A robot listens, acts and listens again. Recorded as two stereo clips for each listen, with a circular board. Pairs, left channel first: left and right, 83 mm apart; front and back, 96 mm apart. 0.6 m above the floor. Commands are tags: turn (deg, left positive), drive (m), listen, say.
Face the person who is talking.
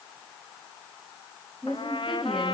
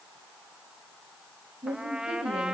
<turn deg="180"/>
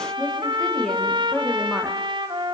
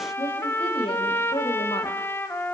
<say>Facing the woman speaking.</say>